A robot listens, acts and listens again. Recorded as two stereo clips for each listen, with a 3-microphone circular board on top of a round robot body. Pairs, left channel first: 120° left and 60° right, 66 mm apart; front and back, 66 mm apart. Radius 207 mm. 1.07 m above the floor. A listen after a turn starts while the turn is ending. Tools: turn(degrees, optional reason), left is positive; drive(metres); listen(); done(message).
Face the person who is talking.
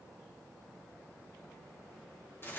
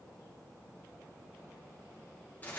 listen()
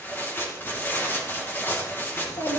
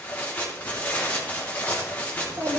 turn(degrees=135, reason="The child speaking: 135° left.")
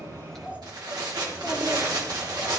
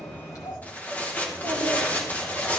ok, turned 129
turn(degrees=15, reason="The child speaking is now 15° left.")
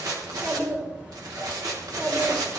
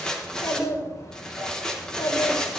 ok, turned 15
done("Facing the child speaking, 2 to 4 m away.")